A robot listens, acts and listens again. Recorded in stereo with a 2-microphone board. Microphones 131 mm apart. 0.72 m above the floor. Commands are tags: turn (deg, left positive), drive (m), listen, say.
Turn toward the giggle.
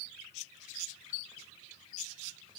<listen/>
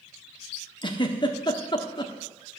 <turn deg="35"/>
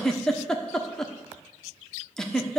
<say>Found it: a giggle, straight ahead, 1 to 2 m away.</say>